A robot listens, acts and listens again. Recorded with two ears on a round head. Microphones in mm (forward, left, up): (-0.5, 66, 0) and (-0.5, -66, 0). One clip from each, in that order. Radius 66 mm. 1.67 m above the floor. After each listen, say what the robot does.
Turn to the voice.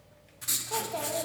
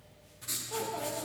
Turn 65° left.
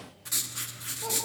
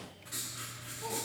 Keep listening.
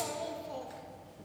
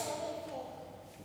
Turn 25° left.
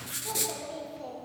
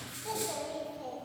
Found it: a child speaking, straight ahead, 1 to 2 m away.